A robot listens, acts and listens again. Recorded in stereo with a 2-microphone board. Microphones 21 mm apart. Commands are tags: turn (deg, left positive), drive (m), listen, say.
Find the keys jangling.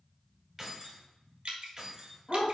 <turn deg="-25"/>
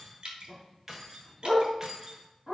<turn deg="-30"/>
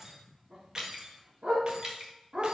<turn deg="-20"/>
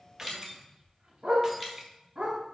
<turn deg="-25"/>
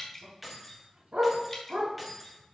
<say>Facing the keys jangling, 1 to 2 m away.</say>